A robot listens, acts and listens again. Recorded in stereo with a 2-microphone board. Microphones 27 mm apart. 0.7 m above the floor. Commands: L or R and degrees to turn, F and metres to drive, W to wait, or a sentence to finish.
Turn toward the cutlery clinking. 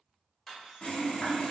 L30
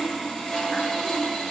W
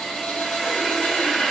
W
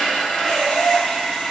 I heard cutlery clinking, but can't make it out now. It was about 20° right or 140° left.